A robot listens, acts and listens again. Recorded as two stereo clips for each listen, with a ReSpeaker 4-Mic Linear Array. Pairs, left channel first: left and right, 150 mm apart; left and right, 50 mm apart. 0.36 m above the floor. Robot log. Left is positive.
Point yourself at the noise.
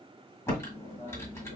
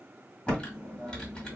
note: The typing on a keyboard: about 20° left or 160° left.
cmd yaw +20
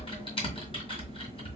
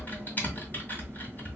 note: So it is at 140° left.
cmd yaw +140
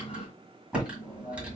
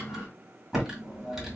note: The typing on a keyboard is now 10° right.
cmd yaw -10
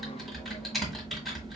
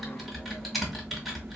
end: Found it: typing on a keyboard, straight ahead.